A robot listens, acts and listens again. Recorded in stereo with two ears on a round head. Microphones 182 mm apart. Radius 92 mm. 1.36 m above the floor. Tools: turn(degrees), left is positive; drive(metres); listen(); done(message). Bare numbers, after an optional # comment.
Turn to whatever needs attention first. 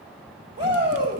# The shout: about 25° right or 155° right.
turn(-25)
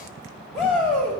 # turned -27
done("Facing the shout, 2 to 4 m away.")